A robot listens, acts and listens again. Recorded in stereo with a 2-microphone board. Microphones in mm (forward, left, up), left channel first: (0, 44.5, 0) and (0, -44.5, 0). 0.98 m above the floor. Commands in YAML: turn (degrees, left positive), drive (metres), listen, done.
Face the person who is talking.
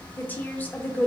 turn: 20
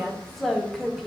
done: "Facing the woman speaking, under 1 m away."